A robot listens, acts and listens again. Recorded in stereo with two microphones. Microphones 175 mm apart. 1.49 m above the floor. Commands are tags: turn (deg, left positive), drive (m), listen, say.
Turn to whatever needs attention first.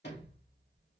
<listen/>
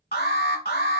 <turn deg="60"/>
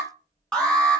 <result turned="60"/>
<say>Found it: an alarm, straight ahead.</say>